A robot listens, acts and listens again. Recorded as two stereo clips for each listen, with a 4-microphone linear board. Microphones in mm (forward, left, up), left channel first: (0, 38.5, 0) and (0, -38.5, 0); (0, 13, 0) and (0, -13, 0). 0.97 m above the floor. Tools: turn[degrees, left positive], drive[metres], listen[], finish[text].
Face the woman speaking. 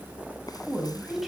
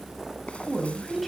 Action: turn[30]
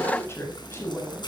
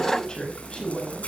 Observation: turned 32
Thought: So it is at 145° left.
Action: turn[145]
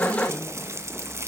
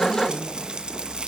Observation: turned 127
Thought: Nothing new. It was at 20° left.
Action: turn[20]
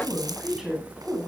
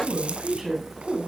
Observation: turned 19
Thought: The woman speaking is now 10° right.
Action: turn[-10]
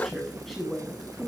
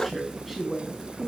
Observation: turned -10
Action: finish[Found it: a woman speaking, straight ahead, over 4 m away.]